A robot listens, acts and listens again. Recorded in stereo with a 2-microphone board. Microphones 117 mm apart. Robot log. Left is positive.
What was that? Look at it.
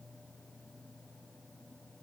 cmd idle
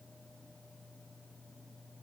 cmd idle
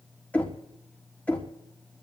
cmd yaw +30
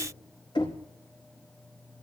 note: So it is at 135° left.
cmd yaw +135
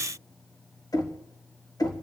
note: The knocking is now 35° left.
cmd yaw +35
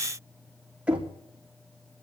note: The knocking is now 10° right.
cmd yaw -10
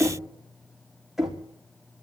end: Found it: knocking, straight ahead.